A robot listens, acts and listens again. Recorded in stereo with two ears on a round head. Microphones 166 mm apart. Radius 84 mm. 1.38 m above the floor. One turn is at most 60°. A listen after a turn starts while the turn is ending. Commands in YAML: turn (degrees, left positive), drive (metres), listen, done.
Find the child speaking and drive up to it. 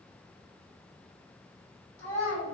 turn: 35
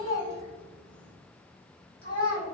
turn: 60
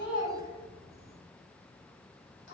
turn: 60
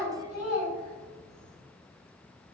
turn: 45
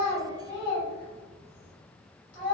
turn: 10
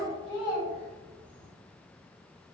drive: 1.0
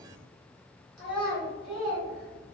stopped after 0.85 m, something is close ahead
done: "Arrived at the child speaking, straight ahead."